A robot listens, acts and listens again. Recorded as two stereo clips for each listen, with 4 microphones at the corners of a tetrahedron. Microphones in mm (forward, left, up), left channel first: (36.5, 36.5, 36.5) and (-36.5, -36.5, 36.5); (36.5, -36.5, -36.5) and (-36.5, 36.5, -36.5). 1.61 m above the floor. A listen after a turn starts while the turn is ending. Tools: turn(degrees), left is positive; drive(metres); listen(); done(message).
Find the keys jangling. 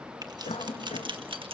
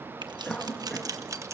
turn(degrees=-165)
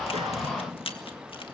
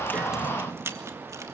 turn(degrees=70)
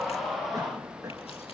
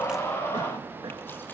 listen()
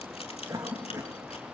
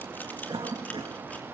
listen()
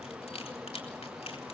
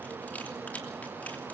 turn(degrees=30)
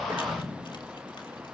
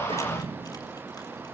listen()
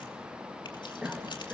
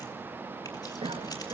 listen()
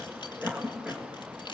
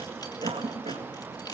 done("Facing where the keys jangling came from. I can't hear it now.")